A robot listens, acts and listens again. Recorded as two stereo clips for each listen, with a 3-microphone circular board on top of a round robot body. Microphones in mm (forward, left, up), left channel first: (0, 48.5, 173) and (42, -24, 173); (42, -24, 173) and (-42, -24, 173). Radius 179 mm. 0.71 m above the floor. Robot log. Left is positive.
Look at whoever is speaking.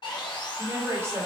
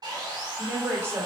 note: The woman speaking: 120° right.
cmd yaw -120
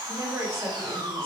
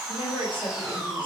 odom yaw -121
end: Found it: a woman speaking, straight ahead.